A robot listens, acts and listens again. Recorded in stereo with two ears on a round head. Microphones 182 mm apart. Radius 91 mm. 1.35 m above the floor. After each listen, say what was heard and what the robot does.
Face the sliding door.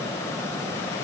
Keep listening.
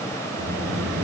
The sliding door: about 50° right or 130° right. Turn 50° right.
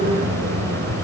So it is at 70° right. Turn 70° right.
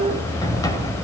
The sliding door is now 20° left. Turn 20° left.
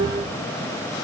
Keep listening.
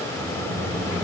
Found it: a sliding door, straight ahead, 2 to 4 m away.